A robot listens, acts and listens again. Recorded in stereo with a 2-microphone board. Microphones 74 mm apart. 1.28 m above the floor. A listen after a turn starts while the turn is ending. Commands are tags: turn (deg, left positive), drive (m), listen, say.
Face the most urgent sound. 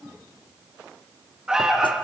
<turn deg="-30"/>
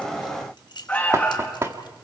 <turn deg="20"/>
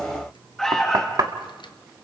<say>Found it: an alarm, straight ahead, 2 to 4 m away.</say>